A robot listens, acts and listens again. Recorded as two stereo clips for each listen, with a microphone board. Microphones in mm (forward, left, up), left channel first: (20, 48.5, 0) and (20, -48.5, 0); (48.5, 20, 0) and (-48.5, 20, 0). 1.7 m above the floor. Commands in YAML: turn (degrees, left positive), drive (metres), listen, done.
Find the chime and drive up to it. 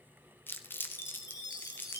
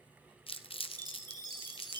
turn: 135
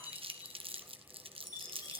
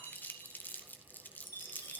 turn: 45
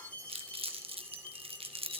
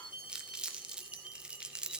turn: 15
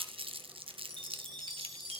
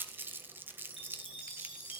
drive: 1.0
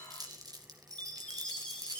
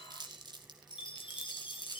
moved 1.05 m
turn: 10
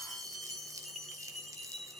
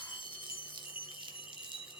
drive: 1.0
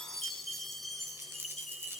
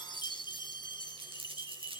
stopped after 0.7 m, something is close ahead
done: "Arrived at the chime, straight ahead."